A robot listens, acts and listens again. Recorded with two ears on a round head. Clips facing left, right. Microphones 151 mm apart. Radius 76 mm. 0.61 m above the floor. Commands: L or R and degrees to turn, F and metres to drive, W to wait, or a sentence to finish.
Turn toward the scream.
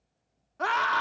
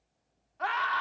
L55
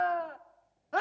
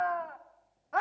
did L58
L45
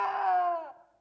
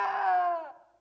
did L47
Found it: a scream, straight ahead, 1 to 2 m away.